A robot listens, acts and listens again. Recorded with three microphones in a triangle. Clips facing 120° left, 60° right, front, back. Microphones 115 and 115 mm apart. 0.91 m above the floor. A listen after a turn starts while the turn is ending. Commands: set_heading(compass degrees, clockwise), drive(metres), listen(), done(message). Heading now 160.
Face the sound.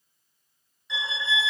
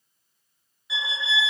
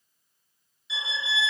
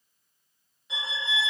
set_heading(300)
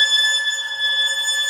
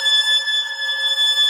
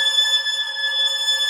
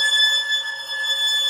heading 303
done("Found it: a violin, straight ahead.")